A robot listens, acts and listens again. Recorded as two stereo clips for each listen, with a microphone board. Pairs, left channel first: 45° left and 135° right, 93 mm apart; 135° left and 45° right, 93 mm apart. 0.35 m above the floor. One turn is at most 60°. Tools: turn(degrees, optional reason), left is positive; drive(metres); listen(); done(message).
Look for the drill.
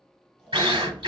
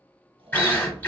turn(degrees=-60, reason="The drill: 155° right.")
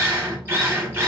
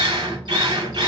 turn(degrees=-60, reason="The drill is now 70° right.")
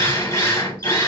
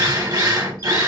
done("Found it: a drill, straight ahead, under 1 m away.")